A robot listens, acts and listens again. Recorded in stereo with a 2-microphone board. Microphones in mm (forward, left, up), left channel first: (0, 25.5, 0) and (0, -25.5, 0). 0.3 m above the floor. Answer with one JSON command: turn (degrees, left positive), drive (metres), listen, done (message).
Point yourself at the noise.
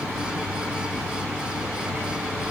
{"listen": true}
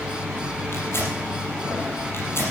{"turn": 55}
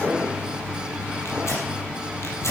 {"turn": 65}
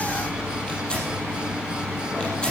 {"turn": 15}
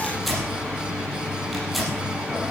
{"done": "Found it: tearing paper, straight ahead."}